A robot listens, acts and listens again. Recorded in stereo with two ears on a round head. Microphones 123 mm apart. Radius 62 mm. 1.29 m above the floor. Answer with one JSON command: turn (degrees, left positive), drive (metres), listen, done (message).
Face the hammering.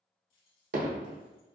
{"turn": -65}
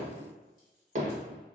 {"turn": -50}
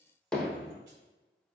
{"done": "Facing the hammering, under 1 m away."}